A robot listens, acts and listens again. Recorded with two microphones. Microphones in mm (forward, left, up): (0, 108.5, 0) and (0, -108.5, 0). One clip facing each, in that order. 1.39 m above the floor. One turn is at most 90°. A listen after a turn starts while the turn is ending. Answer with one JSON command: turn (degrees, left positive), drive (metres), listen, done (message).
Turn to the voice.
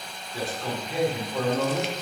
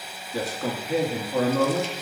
{"turn": -90}
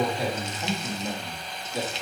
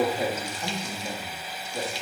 {"done": "Found it: a man speaking, straight ahead, 2 to 4 m away."}